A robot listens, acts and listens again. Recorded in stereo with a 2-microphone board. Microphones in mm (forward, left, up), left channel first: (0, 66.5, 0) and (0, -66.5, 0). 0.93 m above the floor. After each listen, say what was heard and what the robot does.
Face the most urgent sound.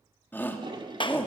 Turn 30° left.
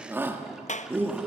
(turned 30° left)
So it is at 15° right. Turn 15° right.
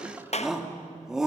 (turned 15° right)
Found it: a shout, straight ahead, 1 to 2 m away.